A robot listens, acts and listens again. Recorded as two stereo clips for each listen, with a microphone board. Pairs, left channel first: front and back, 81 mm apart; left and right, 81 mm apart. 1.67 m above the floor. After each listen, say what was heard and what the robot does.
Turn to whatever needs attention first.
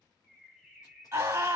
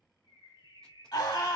The scream: 130° left. Turn 130° left.
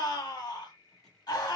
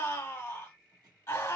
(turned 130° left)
The scream is now 35° left. Turn 35° left.
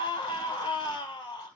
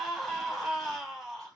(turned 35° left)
Found it: a scream, straight ahead, 1 to 2 m away.